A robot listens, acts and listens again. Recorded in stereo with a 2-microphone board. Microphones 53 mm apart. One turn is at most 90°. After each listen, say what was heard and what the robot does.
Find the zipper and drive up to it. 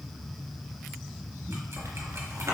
The zipper: about 70° right or 110° right. Turn 70° right.
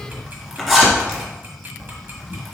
Drive 1.0 m forward.
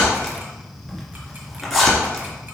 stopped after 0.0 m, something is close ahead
Something is in my way. I am facing the zipper but have not reached it.